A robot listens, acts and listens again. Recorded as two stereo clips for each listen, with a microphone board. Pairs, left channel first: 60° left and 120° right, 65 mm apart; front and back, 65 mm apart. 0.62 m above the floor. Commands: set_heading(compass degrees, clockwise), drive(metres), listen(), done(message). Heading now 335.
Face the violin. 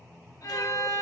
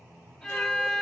set_heading(250)
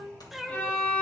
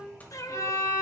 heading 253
done("Found it: a violin, straight ahead.")